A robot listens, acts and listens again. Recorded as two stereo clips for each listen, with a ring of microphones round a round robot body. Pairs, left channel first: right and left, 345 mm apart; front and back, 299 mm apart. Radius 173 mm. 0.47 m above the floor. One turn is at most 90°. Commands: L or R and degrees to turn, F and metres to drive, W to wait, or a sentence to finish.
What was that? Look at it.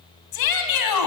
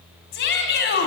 R60
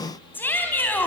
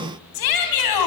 Facing the shout, 2 to 4 m away.